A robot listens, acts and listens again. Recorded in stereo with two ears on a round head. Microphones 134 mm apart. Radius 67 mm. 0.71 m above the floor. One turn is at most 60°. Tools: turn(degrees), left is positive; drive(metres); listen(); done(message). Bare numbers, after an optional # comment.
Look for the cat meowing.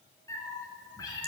# The cat meowing: about 25° left or 155° left.
turn(25)
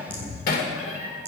# So it is at 130° left.
turn(60)
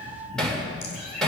# The cat meowing is now 65° left.
turn(60)
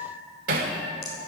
done("Facing the cat meowing.")